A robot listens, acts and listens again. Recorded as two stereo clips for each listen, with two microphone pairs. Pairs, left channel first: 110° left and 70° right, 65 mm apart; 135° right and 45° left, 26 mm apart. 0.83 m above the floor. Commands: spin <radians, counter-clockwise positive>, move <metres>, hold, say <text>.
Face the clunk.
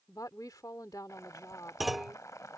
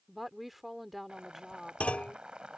spin -2.79
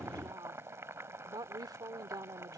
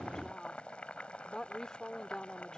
say I heard a clunk from this way, but can't make it out now.